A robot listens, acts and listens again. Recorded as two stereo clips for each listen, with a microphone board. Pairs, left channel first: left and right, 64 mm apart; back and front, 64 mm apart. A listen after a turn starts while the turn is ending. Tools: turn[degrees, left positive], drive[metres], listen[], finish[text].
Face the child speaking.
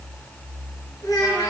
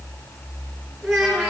Thought: The child speaking: 95° left.
Action: turn[95]
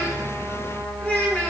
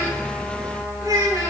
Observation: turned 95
Thought: The child speaking is now 20° left.
Action: turn[20]
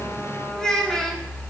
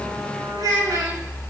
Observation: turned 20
Thought: The child speaking is now 10° left.
Action: turn[10]
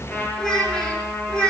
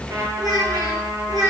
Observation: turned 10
Thought: The child speaking is now 10° left.
Action: turn[10]
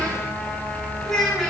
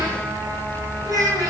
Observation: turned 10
Action: finish[Facing the child speaking, over 4 m away.]